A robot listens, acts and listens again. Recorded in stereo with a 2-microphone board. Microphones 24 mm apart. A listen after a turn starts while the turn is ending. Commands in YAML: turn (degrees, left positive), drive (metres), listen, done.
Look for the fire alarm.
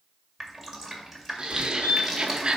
turn: 55
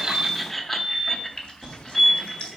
turn: 25
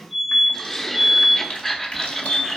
turn: 20
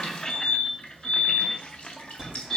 done: "Facing the fire alarm."